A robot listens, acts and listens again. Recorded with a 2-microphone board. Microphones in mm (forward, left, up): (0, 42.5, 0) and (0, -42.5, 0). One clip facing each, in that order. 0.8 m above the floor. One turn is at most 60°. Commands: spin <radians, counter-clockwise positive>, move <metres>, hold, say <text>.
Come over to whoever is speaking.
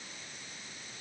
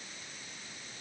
hold
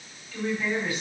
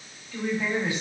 spin -0.35
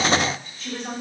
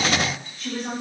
move 1.0
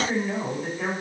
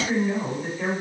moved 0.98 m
spin 0.17
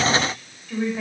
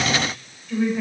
move 1.0
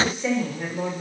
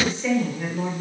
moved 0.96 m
spin 0.17
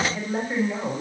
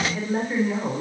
move 1.0
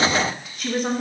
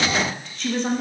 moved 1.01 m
move 1.0
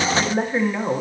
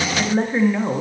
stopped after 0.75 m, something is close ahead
say Arrived at the woman speaking, straight ahead.